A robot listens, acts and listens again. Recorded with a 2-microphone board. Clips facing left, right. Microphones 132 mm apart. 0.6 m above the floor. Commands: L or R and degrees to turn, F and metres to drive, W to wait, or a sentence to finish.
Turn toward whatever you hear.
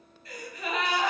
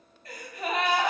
R60
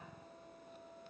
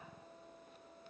W
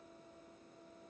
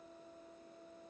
I heard a gasp, but can't make it out now. It was about straight ahead or 60° right.